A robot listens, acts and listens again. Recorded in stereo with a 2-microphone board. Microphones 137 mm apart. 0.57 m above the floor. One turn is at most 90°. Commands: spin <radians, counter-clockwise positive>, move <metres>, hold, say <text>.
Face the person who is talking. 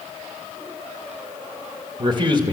spin -0.61
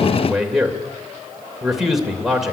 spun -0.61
say Facing the man speaking.